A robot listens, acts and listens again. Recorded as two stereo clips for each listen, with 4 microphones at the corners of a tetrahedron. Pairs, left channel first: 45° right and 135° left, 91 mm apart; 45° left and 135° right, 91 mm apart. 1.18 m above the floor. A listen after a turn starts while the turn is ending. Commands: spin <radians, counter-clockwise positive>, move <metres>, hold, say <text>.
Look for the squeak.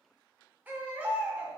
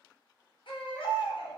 hold
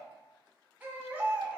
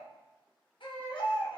hold
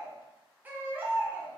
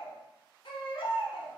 say I can't make out a squeak to turn to.